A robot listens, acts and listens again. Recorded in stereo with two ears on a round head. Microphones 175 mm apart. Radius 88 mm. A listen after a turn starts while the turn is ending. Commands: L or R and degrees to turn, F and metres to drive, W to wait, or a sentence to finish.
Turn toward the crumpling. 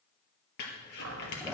L65
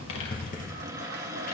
L50
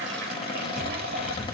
Found it: crumpling, straight ahead, 2 to 4 m away.